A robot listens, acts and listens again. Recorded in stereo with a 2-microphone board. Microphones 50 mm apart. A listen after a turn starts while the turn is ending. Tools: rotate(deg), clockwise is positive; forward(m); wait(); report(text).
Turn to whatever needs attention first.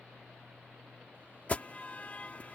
rotate(-30)
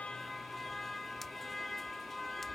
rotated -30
report("Facing the alarm.")